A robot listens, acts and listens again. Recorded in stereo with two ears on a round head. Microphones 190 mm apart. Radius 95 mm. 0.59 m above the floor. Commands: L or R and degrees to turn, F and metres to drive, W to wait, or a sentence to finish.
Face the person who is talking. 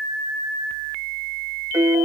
W
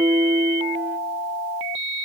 W
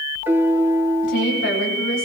L60
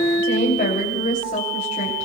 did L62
L40
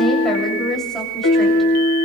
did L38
Found it: a woman speaking, straight ahead.